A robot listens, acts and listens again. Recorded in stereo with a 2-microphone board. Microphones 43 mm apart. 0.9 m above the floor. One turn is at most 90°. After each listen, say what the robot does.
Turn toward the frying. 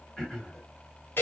Keep listening.
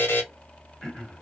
Keep listening.
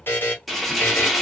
Turn 30° left.
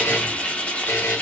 Turn 90° left.
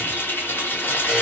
Turn 60° left.
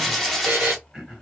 Facing the frying, under 1 m away.